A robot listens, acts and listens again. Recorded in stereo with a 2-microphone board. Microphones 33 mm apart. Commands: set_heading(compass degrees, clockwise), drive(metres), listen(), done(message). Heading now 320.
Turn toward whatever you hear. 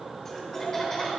set_heading(290)
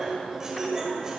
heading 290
set_heading(315)
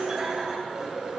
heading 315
set_heading(340)
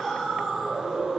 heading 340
set_heading(330)
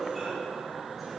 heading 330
done("Facing the laughter.")